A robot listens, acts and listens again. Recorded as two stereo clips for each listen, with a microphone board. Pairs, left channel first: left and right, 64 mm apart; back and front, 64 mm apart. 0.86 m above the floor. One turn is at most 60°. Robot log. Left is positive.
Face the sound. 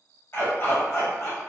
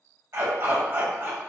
note: The dog barking: 55° left.
cmd yaw +55
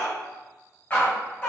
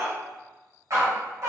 note: The dog barking is now 40° left.
cmd yaw +40
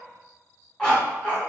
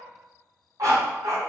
note: The dog barking is now 20° left.
cmd yaw +20
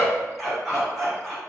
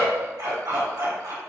end: Facing the dog barking.